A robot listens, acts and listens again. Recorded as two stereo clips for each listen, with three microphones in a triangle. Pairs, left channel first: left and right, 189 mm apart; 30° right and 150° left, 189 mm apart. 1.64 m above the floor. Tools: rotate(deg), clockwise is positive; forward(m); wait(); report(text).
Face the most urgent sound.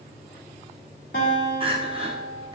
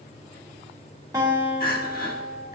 rotate(35)
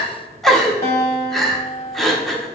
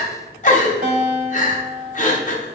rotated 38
report("Facing the crying.")